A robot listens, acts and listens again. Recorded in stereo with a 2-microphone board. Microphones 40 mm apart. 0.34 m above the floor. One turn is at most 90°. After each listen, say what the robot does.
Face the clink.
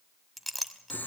Turn 30° left.
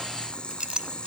Turn 30° right.
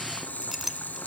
Turn 10° right.
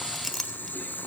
Facing the clink.